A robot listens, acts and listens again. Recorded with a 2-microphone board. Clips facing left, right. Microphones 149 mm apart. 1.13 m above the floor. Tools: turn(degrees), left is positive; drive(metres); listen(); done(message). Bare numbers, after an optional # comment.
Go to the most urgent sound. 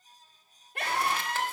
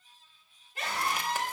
# The scream: about 65° left or 115° left.
turn(65)
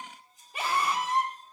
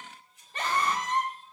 # So it is at 10° left.
turn(10)
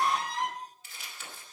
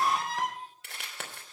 drive(1.0)
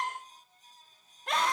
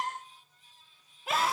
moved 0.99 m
drive(1.0)
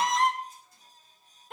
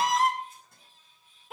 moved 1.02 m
drive(1.0)
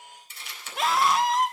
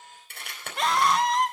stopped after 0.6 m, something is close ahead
done("Arrived at the scream, straight ahead.")